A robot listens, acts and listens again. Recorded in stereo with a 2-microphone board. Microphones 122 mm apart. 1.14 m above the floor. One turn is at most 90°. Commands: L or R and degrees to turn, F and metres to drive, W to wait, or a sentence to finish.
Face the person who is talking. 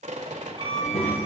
L60
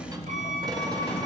L45
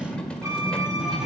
Found it: a child speaking, straight ahead, over 4 m away.